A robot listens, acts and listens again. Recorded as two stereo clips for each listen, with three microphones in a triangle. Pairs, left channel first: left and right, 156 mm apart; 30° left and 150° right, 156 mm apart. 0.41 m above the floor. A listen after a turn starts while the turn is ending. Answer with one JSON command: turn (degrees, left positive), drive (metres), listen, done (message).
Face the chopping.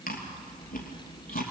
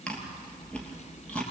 {"listen": true}
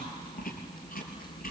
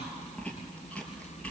{"listen": true}
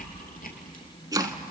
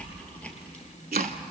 {"turn": -155}
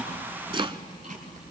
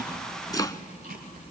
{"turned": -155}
{"turn": -35}
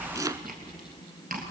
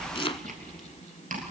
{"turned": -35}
{"turn": -25}
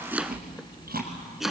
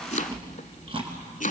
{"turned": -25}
{"done": "Found it: chopping, straight ahead, under 1 m away."}